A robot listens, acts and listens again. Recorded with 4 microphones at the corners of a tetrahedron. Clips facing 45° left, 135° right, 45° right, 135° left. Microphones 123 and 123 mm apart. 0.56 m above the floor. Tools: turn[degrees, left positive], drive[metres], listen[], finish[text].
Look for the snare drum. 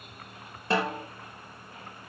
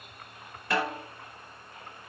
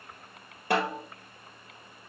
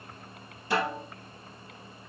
Thought: The snare drum: 15° right.
Action: turn[-15]
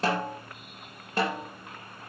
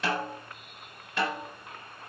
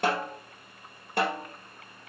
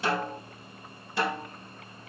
Action: finish[Facing the snare drum.]